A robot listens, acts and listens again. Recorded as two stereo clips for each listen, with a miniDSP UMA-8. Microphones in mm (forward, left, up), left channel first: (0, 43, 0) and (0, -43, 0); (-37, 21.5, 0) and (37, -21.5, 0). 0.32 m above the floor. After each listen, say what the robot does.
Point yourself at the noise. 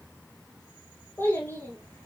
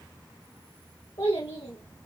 Turn 155° left.
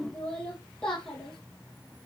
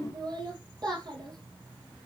Turn 10° left.
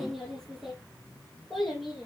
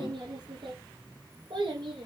Found it: a child speaking, straight ahead, over 4 m away.